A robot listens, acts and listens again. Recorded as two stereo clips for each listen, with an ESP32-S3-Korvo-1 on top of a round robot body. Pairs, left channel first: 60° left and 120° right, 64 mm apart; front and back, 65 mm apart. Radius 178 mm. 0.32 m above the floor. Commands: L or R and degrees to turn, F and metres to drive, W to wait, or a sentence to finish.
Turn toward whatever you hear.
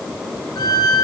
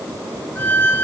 L60
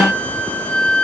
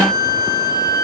R10
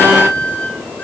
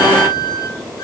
Found it: a violin, straight ahead, 2 to 4 m away.